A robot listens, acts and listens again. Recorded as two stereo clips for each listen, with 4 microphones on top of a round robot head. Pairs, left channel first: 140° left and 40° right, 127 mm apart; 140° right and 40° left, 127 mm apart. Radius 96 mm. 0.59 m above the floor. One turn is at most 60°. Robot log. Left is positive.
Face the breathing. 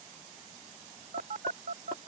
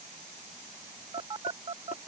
cmd idle
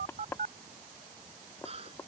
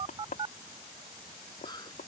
note: The breathing: 80° right.
cmd yaw -60
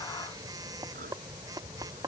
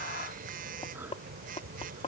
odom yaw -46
note: Nothing new. It was at 35° right.
cmd yaw -35
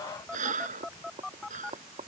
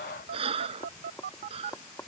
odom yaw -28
note: The breathing is now 10° right.
cmd yaw -10
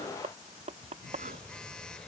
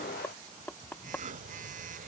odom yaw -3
note: Nothing new. It was at 10° right.
cmd yaw -10
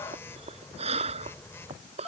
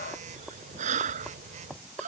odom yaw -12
end: Found it: breathing, straight ahead.